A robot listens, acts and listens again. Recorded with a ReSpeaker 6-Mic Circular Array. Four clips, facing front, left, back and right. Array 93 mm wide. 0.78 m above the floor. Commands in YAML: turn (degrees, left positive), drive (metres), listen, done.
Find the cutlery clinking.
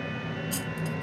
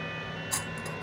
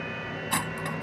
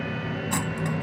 turn: -160
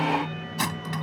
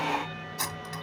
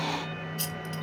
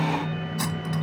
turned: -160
done: "Facing the cutlery clinking."